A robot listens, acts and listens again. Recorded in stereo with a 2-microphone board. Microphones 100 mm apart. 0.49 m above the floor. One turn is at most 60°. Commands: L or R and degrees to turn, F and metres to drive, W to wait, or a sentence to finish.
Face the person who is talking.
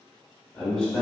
L30
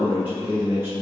R20
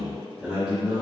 R10
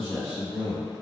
Facing the man speaking, 1 to 2 m away.